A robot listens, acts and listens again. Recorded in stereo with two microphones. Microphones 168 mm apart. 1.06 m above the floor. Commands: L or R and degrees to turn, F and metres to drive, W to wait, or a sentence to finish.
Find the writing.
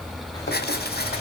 L70
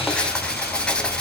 Facing the writing, 2 to 4 m away.